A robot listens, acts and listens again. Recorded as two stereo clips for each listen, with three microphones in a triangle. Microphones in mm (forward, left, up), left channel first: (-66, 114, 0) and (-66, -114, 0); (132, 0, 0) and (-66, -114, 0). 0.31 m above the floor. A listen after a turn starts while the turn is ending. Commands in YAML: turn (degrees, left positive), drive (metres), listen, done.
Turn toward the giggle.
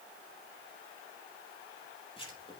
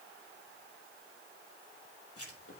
listen: true
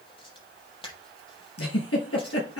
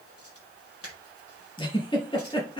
turn: 100
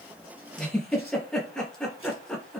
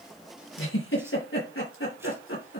done: "Found it: a giggle, straight ahead, over 4 m away."